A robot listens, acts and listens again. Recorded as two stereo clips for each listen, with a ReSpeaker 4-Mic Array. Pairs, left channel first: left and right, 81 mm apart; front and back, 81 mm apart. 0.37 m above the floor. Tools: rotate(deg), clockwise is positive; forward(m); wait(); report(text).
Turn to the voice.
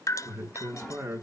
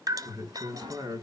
rotate(150)
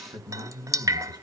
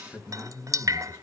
rotate(60)
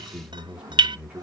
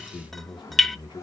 rotate(15)
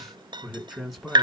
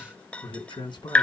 report("Facing the man speaking.")